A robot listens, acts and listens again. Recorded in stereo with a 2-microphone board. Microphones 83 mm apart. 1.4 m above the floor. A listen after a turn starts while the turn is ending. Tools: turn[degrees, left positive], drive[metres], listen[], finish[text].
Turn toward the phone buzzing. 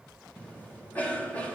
Action: listen[]
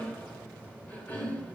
Action: listen[]
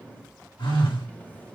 Thought: The phone buzzing: about 75° left or 105° left.
Action: turn[75]
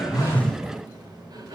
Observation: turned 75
Action: listen[]
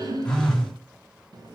Thought: So it is at 10° left.
Action: turn[10]
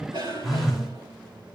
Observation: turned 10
Action: finish[Facing the phone buzzing.]